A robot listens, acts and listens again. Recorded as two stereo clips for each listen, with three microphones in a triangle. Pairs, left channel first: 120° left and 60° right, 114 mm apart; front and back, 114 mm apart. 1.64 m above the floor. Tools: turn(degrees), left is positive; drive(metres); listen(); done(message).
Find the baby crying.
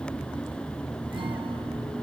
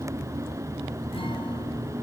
listen()
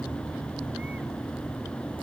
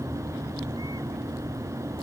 listen()
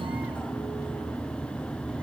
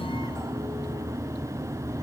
done("I can't make out a baby crying.")